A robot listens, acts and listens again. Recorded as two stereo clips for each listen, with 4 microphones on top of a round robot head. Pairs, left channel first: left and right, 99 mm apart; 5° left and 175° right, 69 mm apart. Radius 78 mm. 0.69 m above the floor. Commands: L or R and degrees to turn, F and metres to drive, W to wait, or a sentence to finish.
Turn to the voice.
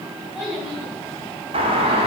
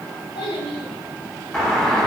R10
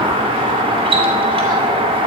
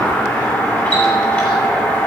W
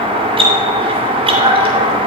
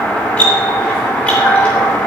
W
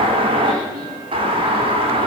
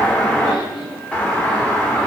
I heard a child speaking from this way, but can't make it out now.